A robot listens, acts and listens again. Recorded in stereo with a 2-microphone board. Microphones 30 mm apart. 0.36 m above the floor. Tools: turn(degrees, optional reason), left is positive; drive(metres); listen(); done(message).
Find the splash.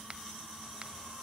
listen()
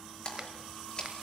turn(degrees=35, reason="The splash: about 35° left or 145° left.")
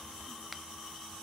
listen()
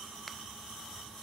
done("I heard a splash, but can't make it out now. It was about straight ahead or 110° left.")